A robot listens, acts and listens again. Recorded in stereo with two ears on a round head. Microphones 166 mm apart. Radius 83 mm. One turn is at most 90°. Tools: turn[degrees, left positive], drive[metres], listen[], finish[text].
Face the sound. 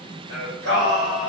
Thought: The singing: about 70° right or 110° right.
Action: turn[-70]
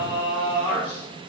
Thought: So it is at 10° right.
Action: turn[-10]
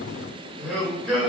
Action: finish[Facing the singing, 1 to 2 m away.]